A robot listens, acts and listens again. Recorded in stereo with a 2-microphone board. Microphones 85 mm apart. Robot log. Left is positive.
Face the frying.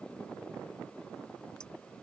cmd idle
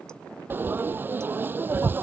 note: The frying: about 25° right or 155° right.
cmd yaw -25
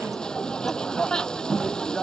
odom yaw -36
note: So it is at 10° left.
cmd yaw +10
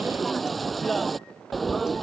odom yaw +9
end: Facing the frying.